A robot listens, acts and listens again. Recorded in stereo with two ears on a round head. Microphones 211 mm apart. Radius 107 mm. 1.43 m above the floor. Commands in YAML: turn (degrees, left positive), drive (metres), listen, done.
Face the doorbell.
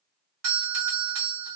turn: -70
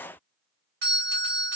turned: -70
turn: -40
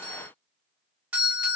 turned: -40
done: "Facing the doorbell, 1 to 2 m away."